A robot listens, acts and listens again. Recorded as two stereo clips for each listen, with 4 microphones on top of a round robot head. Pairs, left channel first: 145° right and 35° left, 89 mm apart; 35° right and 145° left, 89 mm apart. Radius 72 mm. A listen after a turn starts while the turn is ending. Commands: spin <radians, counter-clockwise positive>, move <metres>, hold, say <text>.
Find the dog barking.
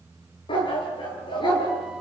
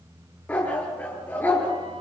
spin -1.83
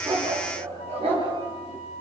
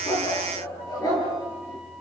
spin 0.26
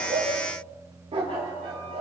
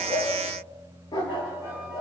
spin 0.17
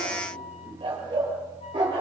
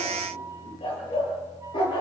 say Found it: a dog barking, straight ahead, over 4 m away.